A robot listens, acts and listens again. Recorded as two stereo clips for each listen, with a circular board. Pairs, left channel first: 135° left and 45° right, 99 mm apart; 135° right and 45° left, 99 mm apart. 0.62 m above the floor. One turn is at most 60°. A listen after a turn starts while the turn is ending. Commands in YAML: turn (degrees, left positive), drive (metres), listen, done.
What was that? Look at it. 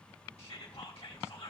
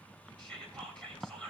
turn: 60
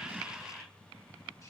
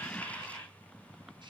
turn: 60
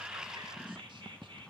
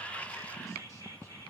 turn: -10
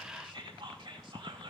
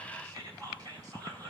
done: "Facing the whispering, 2 to 4 m away."